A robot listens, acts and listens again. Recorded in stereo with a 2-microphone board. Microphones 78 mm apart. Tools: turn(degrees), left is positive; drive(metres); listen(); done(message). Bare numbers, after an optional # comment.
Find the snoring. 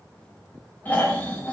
# The snoring: about 25° left or 155° left.
turn(25)
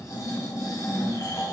# So it is at 125° left.
turn(125)
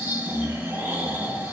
# The snoring is now 30° right.
turn(-30)
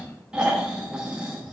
# The snoring is now 15° right.
turn(-15)
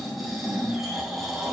done("Found it: snoring, straight ahead.")